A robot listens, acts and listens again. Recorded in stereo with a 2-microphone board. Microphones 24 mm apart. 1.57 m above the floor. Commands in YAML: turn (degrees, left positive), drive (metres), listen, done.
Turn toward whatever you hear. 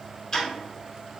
turn: 20
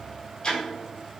turn: 135
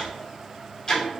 turn: 35
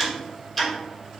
turn: 10
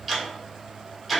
done: "Facing the ticking."